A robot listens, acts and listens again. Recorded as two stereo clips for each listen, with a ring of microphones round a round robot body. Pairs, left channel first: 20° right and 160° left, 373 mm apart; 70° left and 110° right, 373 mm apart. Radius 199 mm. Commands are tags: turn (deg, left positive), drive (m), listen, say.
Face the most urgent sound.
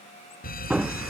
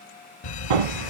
<turn deg="45"/>
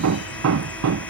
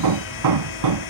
<listen/>
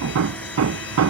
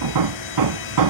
<listen/>
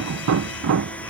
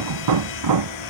<say>I heard a fire alarm from this way, but can't make it out now.</say>